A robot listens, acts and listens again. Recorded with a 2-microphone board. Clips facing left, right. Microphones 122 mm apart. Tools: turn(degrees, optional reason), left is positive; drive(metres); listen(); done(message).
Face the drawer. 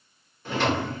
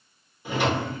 turn(degrees=-30)
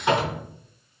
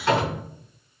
turn(degrees=15, reason="So it is at 15° left.")
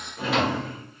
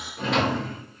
done("Found it: a drawer, straight ahead.")